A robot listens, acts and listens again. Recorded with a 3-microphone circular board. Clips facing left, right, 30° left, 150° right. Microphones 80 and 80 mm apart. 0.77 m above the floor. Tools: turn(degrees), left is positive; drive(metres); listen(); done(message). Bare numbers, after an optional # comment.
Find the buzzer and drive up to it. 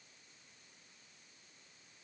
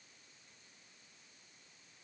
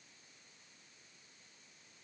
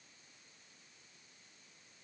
listen()
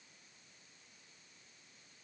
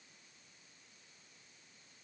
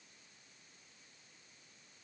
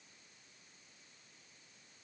listen()
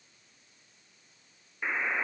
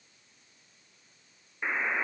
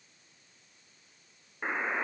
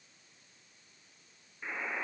# The buzzer: 10° right.
turn(-10)
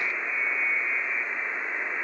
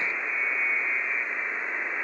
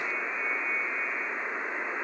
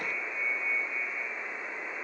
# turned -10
drive(1.0)
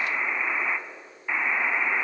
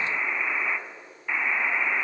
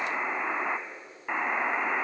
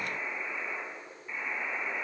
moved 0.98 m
# The buzzer is now 10° left.
turn(10)
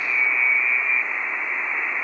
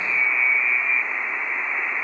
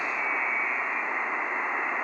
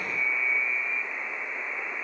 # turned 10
drive(1.0)
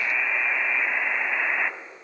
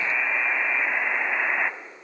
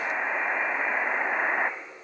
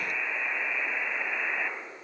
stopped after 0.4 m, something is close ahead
# The buzzer is now 10° right.
turn(-10)
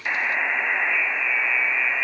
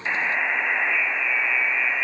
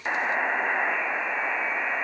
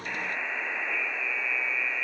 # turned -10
done("I am next to the buzzer.")